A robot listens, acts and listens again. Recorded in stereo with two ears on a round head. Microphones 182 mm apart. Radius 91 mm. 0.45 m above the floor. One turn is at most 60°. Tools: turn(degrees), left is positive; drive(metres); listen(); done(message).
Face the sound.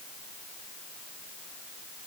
listen()
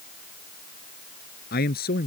turn(degrees=45)
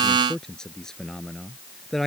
done("Facing the man speaking.")